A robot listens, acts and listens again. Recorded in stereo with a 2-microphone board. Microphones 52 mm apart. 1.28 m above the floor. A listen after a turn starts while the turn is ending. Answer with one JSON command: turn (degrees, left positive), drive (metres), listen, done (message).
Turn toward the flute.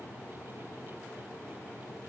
{"listen": true}
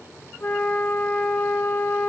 {"turn": 25}
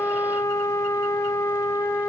{"turn": 125}
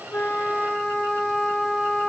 {"done": "Facing the flute."}